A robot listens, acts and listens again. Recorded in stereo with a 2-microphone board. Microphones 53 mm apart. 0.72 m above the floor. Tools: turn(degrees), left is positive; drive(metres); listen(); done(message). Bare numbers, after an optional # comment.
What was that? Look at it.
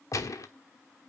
# The gunshot: about 75° left or 105° left.
turn(75)
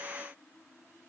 listen()
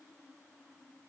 done("I heard a gunshot, but can't make it out now. It was about straight ahead or 30° left.")